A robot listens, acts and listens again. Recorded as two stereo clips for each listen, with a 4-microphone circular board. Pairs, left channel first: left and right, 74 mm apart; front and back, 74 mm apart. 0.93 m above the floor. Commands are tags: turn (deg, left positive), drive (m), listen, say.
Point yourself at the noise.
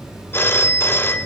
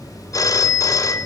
<turn deg="35"/>
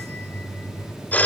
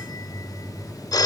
<turn deg="20"/>
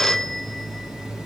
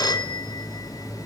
<say>Found it: a phone ringing, straight ahead.</say>